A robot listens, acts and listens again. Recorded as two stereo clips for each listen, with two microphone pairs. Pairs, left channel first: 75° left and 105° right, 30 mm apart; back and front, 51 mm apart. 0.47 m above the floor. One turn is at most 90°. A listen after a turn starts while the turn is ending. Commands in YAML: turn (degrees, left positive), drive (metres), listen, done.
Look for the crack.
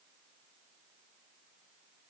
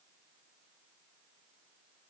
listen: true
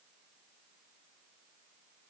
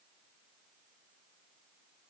listen: true
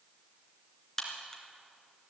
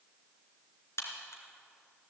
turn: 90
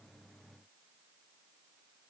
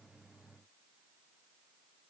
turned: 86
turn: 70
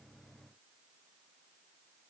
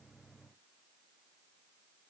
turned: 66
done: "I heard a crack from this way, but can't make it out now."